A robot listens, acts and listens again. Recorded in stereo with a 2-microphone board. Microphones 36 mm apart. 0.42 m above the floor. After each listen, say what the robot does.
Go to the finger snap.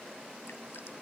Keep listening.
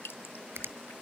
Turn 90° right.
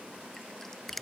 Drive 1.0 m forward.
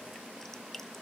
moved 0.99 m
Keep listening.
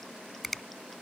Drive 1.0 m forward.
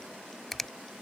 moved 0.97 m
Drive 1.0 m forward.
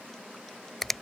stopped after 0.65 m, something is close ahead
Arrived at the finger snap, straight ahead.